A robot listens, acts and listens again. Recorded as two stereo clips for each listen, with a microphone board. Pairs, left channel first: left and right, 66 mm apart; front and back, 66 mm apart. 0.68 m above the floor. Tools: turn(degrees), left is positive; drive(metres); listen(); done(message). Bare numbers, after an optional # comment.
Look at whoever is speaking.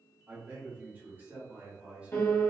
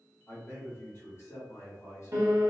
# The man speaking: 25° right.
turn(-25)
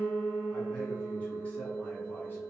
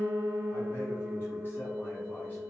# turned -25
listen()
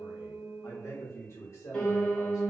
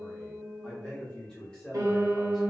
# The man speaking is now 75° left.
turn(75)
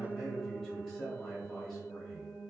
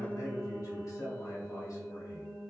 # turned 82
done("Facing the man speaking.")